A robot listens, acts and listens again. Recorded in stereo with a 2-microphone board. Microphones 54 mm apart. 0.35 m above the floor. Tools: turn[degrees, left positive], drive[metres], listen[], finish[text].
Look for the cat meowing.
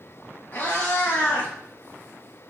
Thought: The cat meowing: about 35° left or 145° left.
Action: turn[35]
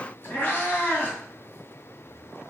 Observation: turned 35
Thought: The cat meowing: about 35° left or 145° left.
Action: turn[35]
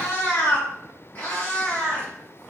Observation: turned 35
Thought: The cat meowing: about 35° left or 145° left.
Action: turn[35]
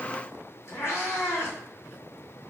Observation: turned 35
Thought: So it is at 115° left.
Action: turn[115]
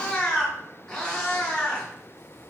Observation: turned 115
Action: finish[Found it: a cat meowing, straight ahead, 1 to 2 m away.]